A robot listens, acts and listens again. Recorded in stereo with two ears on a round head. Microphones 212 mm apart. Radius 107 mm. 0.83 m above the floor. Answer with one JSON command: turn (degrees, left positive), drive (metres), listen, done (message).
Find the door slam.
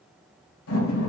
{"turn": 70}
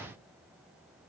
{"listen": true}
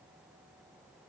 {"done": "I heard a door slam, but can't make it out now. It was about straight ahead or 40° left."}